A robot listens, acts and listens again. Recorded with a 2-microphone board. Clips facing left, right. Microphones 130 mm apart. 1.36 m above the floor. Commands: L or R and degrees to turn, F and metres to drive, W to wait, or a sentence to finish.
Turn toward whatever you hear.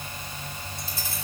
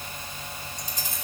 R15
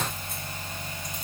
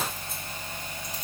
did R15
W
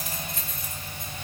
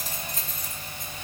R40
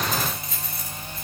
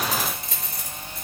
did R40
R100
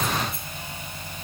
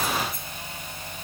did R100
W
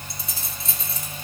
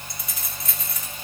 L30
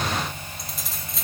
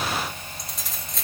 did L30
Found it: keys jangling, straight ahead.